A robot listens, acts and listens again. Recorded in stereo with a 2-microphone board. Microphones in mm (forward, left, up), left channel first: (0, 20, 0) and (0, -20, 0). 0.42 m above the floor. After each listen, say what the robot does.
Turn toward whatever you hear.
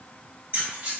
Turn 55° right.
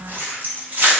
Turn 40° right.
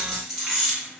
Found it: keys jangling, straight ahead.